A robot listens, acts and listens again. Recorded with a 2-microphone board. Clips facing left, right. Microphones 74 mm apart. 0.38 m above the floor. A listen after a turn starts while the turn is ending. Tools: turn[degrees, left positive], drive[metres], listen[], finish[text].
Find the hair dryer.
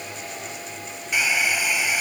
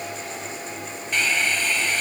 Action: turn[30]
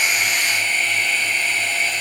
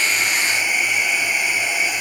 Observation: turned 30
Thought: So it is at 15° right.
Action: turn[-15]
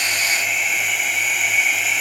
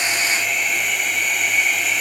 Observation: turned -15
Action: finish[Found it: a hair dryer, straight ahead.]